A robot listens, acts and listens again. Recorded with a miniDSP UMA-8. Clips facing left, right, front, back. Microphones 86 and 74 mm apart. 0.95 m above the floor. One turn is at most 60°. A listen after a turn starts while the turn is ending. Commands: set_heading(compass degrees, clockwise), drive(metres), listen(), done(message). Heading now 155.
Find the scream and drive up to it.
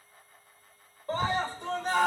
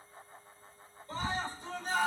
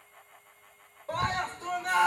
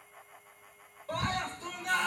set_heading(100)
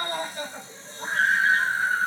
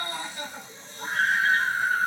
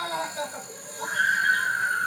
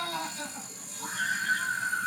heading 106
drive(1.0)
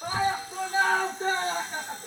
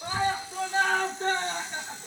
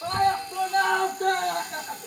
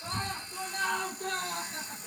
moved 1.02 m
drive(1.0)
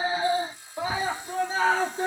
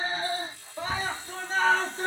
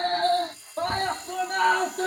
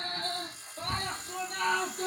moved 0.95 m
drive(1.0)
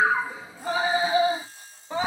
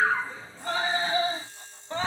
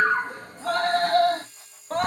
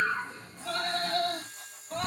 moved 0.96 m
set_heading(96)
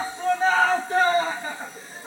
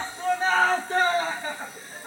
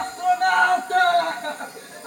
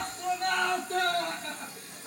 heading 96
drive(1.0)
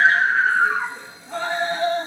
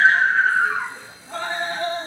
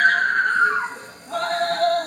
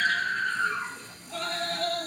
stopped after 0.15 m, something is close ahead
done("Arrived at the scream, straight ahead.")